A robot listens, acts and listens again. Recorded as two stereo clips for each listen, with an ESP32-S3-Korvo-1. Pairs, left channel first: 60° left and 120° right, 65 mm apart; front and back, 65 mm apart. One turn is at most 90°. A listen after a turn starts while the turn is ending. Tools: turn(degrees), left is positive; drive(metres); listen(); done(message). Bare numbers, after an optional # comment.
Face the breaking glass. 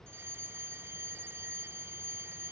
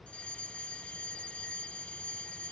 listen()
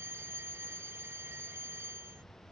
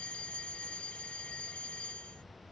listen()
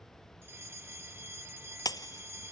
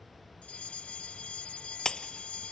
# The breaking glass: 80° left.
turn(80)
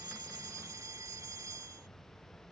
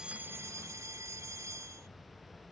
done("Facing where the breaking glass came from. I can't hear it now.")